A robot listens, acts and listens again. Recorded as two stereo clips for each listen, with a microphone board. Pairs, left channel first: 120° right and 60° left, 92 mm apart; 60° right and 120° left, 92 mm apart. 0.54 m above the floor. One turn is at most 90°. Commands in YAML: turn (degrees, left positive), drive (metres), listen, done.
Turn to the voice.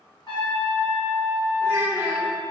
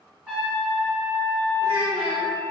turn: 90
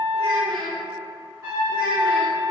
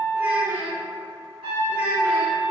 turn: 45
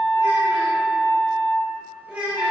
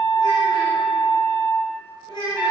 turn: -15
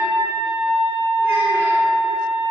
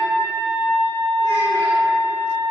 listen: true
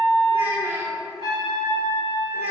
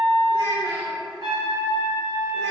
done: "Facing the child speaking, 1 to 2 m away."